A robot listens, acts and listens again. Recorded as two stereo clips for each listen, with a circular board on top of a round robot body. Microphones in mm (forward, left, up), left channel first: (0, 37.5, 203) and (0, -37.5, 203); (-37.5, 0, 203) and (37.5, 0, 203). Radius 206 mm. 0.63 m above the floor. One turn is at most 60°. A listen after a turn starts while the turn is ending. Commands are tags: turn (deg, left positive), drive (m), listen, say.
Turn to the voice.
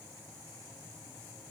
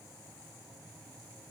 <listen/>
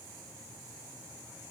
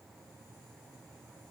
<listen/>
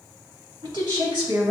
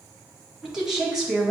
<turn deg="-60"/>
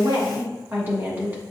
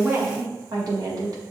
<turn deg="-25"/>
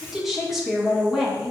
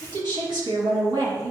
<say>Facing the woman speaking.</say>